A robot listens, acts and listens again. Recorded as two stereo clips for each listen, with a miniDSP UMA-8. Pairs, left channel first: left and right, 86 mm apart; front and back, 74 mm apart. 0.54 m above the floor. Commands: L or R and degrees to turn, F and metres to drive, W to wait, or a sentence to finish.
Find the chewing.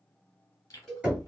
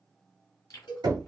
L40
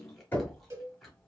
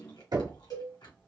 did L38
Facing the chewing, 1 to 2 m away.